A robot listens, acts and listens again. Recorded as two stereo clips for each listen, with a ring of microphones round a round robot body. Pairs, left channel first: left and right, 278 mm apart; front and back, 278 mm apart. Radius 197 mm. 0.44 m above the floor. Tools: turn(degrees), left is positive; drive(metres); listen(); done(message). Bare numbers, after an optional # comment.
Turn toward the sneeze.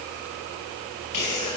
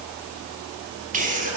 # The sneeze: 120° left.
turn(120)
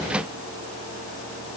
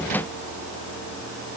done("Facing where the sneeze came from. I can't hear it now.")